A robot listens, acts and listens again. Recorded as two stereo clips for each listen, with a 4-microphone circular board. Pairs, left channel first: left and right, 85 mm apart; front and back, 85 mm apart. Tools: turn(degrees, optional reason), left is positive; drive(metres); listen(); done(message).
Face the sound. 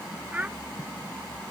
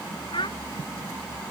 turn(degrees=-15, reason="The child speaking: 15° right.")
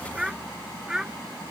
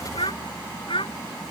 done("Facing the child speaking.")